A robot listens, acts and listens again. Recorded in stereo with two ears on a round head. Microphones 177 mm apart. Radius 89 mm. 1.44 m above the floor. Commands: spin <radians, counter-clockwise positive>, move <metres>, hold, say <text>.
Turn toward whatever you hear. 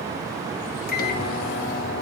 spin 0.79
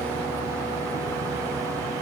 hold
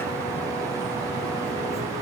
hold
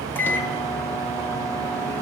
spin 0.17
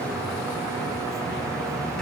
hold
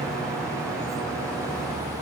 hold
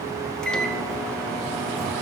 say Found it: a microwave, straight ahead.